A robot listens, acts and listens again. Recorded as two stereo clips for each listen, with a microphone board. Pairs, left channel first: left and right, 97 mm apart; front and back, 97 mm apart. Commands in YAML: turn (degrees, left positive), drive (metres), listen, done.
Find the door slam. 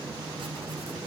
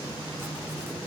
listen: true
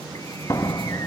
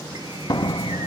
turn: 45
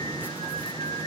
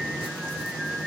done: "Facing where the door slam came from. I can't hear it now."